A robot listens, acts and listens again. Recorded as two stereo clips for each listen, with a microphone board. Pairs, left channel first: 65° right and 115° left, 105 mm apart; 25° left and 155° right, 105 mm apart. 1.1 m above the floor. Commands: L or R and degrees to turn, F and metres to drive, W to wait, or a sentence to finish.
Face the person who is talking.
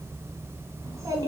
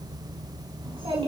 L170
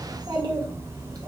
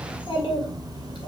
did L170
L65
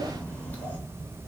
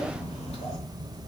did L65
L10
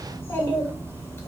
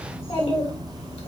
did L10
Facing the child speaking, 2 to 4 m away.